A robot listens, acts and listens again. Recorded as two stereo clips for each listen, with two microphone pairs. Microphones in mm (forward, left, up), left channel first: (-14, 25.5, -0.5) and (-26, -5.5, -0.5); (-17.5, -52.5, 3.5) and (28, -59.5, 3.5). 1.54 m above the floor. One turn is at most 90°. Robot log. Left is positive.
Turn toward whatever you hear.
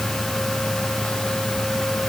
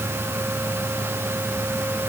cmd idle
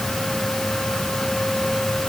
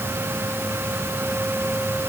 cmd idle
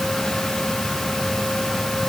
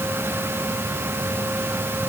end: I can't make out anything to turn to.